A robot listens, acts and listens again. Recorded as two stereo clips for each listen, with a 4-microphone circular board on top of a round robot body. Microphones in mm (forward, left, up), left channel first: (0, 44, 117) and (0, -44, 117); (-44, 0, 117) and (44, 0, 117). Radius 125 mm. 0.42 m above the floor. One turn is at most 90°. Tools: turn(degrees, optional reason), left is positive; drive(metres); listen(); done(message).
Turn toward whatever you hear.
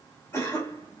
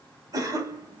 turn(degrees=35, reason="The cough: 35° left.")
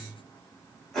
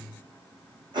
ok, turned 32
done("Facing the cough, 2 to 4 m away.")